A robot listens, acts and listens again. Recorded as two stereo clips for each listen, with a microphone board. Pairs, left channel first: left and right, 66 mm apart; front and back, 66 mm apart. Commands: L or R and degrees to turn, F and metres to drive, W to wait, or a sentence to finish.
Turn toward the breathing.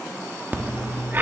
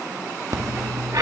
R145
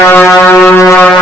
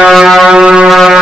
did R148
W
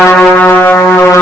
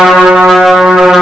W
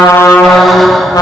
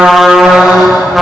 Facing where the breathing came from. I can't hear it now.